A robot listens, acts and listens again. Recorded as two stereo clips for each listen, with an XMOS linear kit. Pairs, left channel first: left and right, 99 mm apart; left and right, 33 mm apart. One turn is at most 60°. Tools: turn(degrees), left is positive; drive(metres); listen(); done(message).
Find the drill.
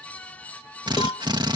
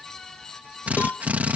turn(degrees=-50)
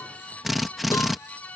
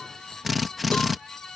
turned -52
done("Facing the drill.")